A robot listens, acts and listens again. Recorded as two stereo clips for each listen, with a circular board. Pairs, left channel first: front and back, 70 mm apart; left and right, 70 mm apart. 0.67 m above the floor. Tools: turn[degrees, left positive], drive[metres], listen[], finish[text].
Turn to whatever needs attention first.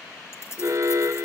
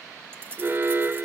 Thought: The alarm: 145° right.
Action: turn[-145]
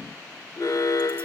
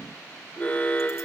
Thought: The alarm is now 25° left.
Action: turn[25]
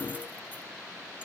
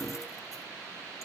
Action: listen[]
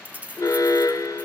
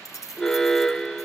Thought: The alarm is now 10° left.
Action: turn[10]
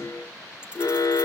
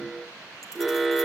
Action: finish[Found it: an alarm, straight ahead.]